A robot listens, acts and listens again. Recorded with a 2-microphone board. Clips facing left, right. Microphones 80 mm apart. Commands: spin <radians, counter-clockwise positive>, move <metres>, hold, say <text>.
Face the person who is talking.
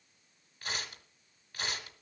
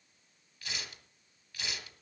hold
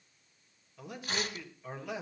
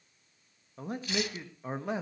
spin -0.61
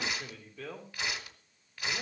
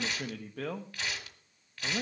spin -1.83
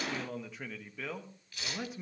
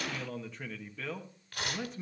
say Facing the man speaking, 1 to 2 m away.